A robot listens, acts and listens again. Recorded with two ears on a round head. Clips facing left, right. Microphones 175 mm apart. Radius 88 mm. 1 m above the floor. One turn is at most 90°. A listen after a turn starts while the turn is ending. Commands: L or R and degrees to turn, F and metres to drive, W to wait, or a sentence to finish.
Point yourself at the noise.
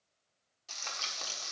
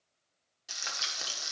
R30
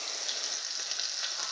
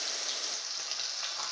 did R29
L15
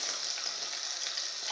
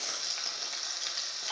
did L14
Found it: frying, straight ahead, 1 to 2 m away.